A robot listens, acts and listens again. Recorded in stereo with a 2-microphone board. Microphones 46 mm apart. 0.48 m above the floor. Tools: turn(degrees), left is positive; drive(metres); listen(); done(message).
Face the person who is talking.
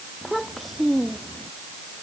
turn(degrees=30)
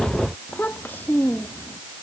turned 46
turn(degrees=135)
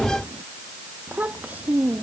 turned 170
turn(degrees=-35)
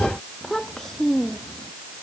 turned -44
turn(degrees=10)
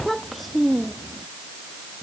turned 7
done("Facing the child speaking.")